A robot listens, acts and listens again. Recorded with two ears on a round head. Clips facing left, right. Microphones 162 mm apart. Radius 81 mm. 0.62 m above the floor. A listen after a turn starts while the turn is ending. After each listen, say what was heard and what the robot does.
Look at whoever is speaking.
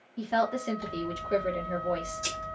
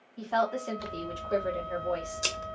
The woman speaking: about 20° left or 160° left. Turn 20° left.
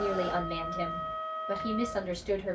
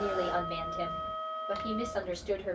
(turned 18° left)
Found it: a woman speaking, straight ahead, 1 to 2 m away.